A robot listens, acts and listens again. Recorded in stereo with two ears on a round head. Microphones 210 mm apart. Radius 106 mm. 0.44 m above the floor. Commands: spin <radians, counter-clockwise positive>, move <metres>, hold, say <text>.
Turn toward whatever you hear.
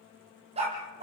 spin -0.44
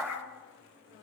say Facing the dog barking.